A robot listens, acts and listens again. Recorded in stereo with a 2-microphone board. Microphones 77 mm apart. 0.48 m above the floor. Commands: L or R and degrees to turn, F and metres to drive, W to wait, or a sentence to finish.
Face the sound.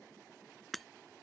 L30
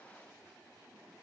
W
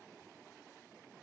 I heard breaking glass, but can't make it out now. It was about 30° right or 150° left.